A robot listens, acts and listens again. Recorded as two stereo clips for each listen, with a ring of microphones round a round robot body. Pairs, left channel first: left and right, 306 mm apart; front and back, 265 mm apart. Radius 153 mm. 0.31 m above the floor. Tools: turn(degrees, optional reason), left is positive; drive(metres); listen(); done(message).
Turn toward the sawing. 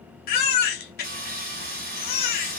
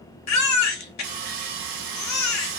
turn(degrees=-155, reason="The sawing: 155° right.")
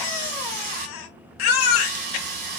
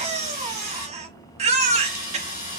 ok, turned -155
turn(degrees=-70, reason="The sawing is now 70° right.")
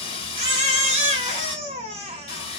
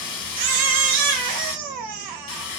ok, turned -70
turn(degrees=15, reason="The sawing is now 15° left.")
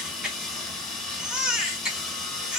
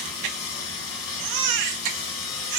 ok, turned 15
done("Facing the sawing, under 1 m away.")